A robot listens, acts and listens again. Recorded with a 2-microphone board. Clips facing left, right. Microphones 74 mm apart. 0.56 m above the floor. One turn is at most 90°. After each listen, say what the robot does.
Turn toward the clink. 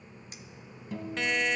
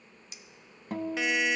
Turn 40° left.
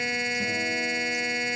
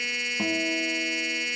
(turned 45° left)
Keep listening.
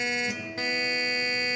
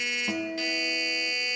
Keep listening.
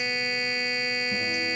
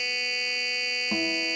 I heard a clink, but can't make it out now. It was about 5° right or 95° left.